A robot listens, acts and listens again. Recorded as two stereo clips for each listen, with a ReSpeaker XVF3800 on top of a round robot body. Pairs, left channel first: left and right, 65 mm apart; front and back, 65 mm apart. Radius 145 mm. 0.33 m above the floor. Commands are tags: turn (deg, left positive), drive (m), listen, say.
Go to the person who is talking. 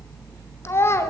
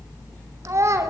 <turn deg="140"/>
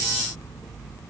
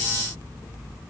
<listen/>
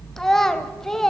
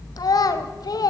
<turn deg="10"/>
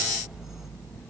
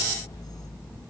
<listen/>
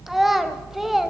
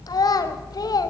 <drive m="1.0"/>
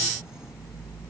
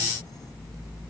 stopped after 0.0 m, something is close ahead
<listen/>
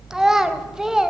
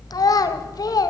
<turn deg="-10"/>
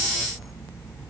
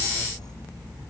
<listen/>
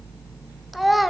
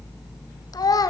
<say>Something is in my way. I am facing the child speaking but have not reached it.</say>